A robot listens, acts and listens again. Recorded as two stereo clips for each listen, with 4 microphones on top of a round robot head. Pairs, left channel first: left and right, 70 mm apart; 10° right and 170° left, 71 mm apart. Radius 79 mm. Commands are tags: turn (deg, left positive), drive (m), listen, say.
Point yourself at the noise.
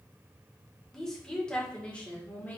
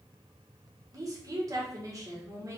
<turn deg="150"/>
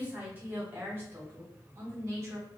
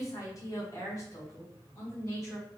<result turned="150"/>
<turn deg="-50"/>
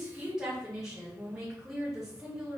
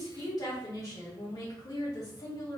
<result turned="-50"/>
<turn deg="-10"/>
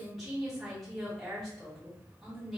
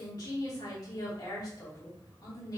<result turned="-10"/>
<say>Facing the woman speaking.</say>